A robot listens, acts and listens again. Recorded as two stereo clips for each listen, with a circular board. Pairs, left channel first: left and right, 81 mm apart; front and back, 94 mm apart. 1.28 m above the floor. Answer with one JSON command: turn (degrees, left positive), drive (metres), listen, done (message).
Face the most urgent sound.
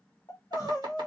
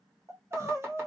{"turn": 125}
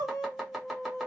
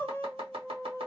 {"turn": 65}
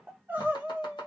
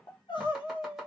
{"turn": -25}
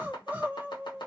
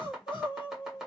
{"turn": -25}
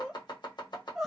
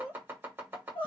{"done": "Found it: crying, straight ahead, under 1 m away."}